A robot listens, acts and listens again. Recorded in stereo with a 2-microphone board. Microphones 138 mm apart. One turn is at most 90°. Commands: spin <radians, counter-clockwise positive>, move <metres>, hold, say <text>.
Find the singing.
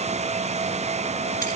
hold
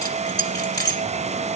hold
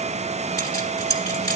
say I can't make out singing to turn to.